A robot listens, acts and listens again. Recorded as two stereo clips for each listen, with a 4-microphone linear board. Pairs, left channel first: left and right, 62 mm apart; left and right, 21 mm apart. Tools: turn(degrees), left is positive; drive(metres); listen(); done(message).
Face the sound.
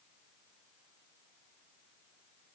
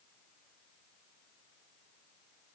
listen()
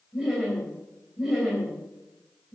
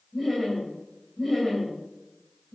turn(degrees=-30)
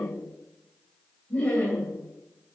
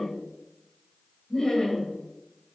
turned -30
turn(degrees=20)
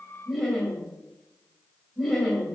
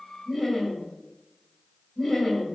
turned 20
done("Found it: laughter, straight ahead, 2 to 4 m away.")